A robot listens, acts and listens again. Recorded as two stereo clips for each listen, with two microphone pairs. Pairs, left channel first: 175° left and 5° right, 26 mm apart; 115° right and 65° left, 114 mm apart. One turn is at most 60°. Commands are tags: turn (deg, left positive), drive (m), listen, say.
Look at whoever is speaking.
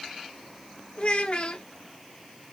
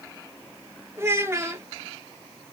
<turn deg="60"/>
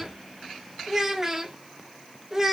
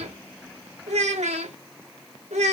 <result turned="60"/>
<turn deg="60"/>
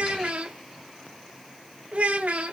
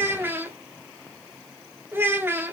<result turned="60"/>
<say>Found it: a child speaking, straight ahead, 1 to 2 m away.</say>